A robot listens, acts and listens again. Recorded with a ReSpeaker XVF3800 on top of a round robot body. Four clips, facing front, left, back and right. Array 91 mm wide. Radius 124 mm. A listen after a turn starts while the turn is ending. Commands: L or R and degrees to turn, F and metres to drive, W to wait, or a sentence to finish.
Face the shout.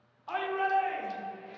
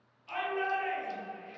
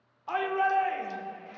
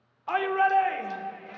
R105
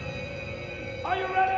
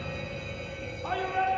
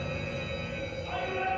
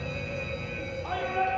L10
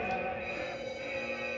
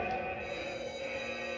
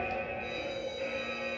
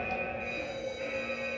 W
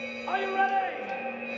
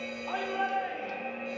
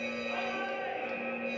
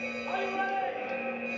Facing the shout, under 1 m away.